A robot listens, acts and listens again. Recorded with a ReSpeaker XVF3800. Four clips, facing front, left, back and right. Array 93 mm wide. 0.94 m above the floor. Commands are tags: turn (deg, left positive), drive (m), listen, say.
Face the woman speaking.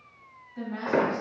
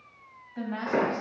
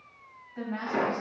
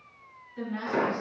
<turn deg="95"/>
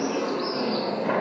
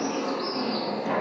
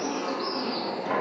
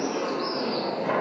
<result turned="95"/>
<listen/>
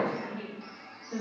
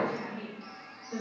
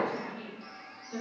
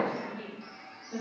<say>Facing the woman speaking.</say>